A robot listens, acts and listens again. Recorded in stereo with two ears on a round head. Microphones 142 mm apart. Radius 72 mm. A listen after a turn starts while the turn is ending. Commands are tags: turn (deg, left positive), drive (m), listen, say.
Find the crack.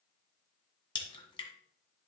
<turn deg="35"/>
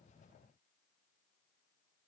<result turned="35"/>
<listen/>
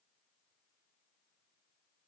<say>I heard a crack, but can't make it out now. It was about straight ahead or 110° left.</say>